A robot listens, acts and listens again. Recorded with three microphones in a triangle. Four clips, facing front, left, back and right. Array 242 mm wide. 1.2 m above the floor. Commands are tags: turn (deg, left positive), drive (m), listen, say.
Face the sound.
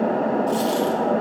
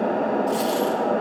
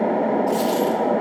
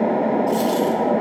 <turn deg="30"/>
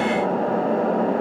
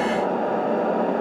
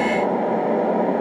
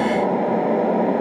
<say>I heard a dropped coin from this way, but can't make it out now.</say>